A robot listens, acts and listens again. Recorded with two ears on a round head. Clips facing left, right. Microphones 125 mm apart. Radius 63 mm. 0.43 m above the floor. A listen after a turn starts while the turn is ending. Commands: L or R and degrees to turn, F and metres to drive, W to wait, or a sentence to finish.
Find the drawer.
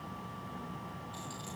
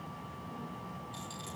W
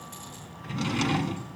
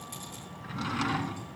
L25
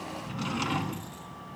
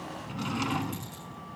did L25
Found it: a drawer, straight ahead, 1 to 2 m away.